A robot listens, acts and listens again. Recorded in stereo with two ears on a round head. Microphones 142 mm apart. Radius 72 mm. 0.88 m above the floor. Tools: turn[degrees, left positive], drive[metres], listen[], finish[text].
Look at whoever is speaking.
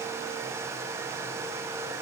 Action: listen[]
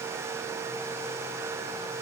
Action: listen[]
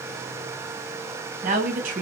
Thought: The woman speaking: about 50° right or 130° right.
Action: turn[-50]
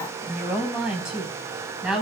Action: finish[Found it: a woman speaking, straight ahead.]